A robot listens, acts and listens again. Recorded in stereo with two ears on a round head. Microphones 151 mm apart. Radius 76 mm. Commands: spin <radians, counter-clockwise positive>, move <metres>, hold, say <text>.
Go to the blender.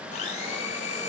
spin 0.70
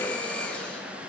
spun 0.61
move 1.0
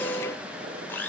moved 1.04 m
spin 0.17
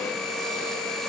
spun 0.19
move 1.0
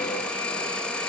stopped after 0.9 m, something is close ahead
say Arrived at the blender, straight ahead.